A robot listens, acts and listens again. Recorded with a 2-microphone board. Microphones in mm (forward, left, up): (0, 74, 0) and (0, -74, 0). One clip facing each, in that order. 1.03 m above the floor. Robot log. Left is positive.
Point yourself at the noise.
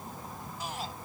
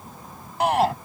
note: The shout: about 70° right or 110° right.
cmd yaw -70
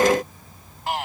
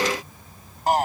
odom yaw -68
note: So it is at 40° right.
cmd yaw -40
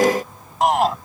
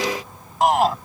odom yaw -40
end: Found it: a shout, straight ahead.